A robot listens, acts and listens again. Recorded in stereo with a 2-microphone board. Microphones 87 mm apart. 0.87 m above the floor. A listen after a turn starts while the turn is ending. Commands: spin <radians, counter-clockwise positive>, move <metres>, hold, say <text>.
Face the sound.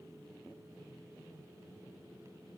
hold
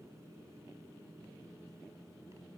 hold
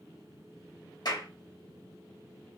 spin 0.96
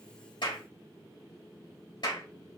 spin 1.13
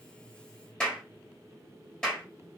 spin 0.17
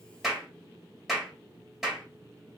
say Found it: a clap, straight ahead.